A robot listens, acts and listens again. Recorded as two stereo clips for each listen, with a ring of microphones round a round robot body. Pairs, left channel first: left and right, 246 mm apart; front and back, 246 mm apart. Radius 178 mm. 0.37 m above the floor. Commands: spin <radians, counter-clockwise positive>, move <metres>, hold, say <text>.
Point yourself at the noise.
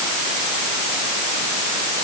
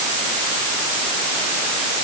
hold
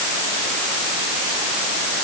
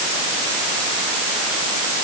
hold
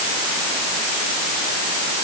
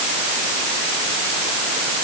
say I can't make out anything to turn to.